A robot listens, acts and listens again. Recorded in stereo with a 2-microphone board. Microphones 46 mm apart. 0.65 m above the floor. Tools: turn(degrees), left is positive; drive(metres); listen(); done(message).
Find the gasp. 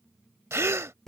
turn(degrees=-90)
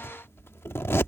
done("Facing where the gasp came from. I can't hear it now.")